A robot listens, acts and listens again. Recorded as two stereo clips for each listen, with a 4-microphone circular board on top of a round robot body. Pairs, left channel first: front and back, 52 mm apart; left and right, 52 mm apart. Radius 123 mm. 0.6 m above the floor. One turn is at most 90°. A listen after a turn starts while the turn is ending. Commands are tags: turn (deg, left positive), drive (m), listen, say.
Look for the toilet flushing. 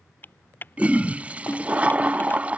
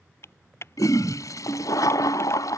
<turn deg="90"/>
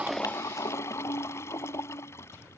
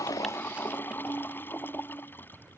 <turn deg="40"/>
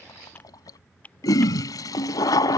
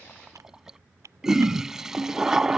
<turn deg="-10"/>
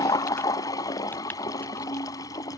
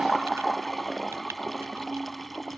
<say>Found it: a toilet flushing, straight ahead.</say>